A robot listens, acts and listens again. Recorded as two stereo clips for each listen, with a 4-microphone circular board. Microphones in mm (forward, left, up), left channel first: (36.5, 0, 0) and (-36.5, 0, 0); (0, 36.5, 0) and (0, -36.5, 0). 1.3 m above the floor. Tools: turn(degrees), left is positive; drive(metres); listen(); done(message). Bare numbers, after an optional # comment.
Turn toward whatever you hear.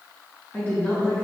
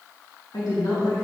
# The woman speaking: 65° left.
turn(65)
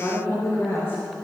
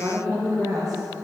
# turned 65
# The woman speaking is now 55° right.
turn(-55)
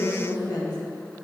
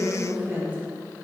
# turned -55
# The woman speaking is now 25° right.
turn(-25)
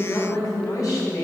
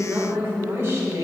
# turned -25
# The woman speaking is now 40° right.
turn(-40)
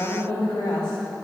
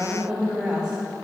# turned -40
# The woman speaking is now 15° right.
turn(-15)
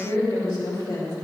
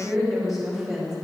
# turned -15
done("Found it: a woman speaking, straight ahead, 2 to 4 m away.")